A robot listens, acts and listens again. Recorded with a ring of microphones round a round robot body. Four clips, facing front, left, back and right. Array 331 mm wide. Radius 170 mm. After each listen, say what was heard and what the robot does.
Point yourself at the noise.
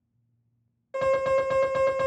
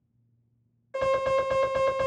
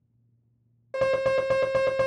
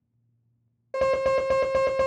The alarm: 130° right. Turn 130° right.
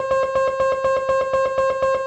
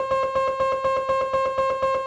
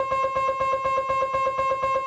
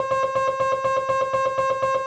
Facing the alarm.